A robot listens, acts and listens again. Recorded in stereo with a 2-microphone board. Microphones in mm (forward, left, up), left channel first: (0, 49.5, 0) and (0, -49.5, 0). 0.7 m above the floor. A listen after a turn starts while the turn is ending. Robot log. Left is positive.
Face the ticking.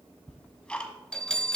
cmd yaw +30
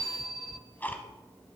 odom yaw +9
note: The ticking: about 20° left or 160° left.
cmd yaw +20
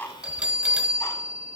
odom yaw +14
cmd idle
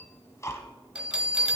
note: So it is at 145° left.
cmd yaw +145
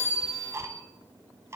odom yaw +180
note: The ticking is now 35° right.
cmd yaw -35
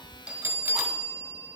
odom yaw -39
cmd idle
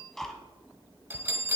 end: Facing the ticking.